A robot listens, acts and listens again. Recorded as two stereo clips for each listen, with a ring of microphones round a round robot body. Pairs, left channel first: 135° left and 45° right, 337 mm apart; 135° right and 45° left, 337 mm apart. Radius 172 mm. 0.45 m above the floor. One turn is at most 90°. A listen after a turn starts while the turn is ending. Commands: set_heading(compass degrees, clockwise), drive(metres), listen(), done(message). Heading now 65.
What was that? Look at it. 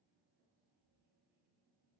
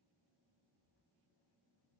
listen()
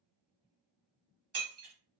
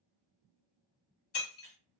set_heading(145)
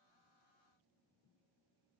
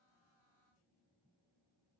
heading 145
done("Facing where the breaking glass came from. I can't hear it now.")